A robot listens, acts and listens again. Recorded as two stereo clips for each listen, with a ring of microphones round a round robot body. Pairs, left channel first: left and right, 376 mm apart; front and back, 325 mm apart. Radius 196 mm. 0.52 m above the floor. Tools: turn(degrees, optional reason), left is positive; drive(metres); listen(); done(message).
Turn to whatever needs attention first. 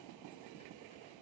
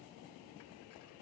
listen()
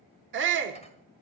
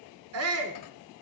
turn(degrees=-145, reason="The shout: 145° right.")
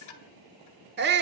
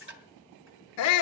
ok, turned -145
turn(degrees=-30, reason="The shout is now 30° right.")
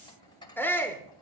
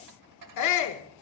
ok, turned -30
done("Facing the shout, 1 to 2 m away.")